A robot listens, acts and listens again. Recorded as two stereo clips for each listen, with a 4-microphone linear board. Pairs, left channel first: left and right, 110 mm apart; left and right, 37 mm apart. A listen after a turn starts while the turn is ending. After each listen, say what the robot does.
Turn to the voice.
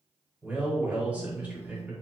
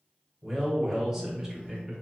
Turn 30° right.
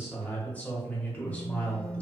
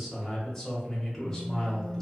Turn 15° left.
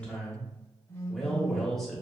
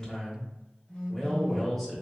Found it: a man speaking, straight ahead, 1 to 2 m away.